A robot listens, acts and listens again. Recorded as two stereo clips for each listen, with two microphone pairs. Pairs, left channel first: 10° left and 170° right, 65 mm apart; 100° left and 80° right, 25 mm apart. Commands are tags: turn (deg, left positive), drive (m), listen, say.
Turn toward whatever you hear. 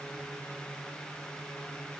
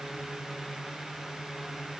<listen/>
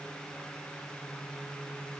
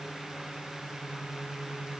<listen/>
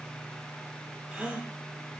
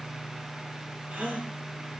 <turn deg="-95"/>
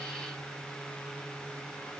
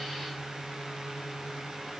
<say>Facing where the gasp came from. I can't hear it now.</say>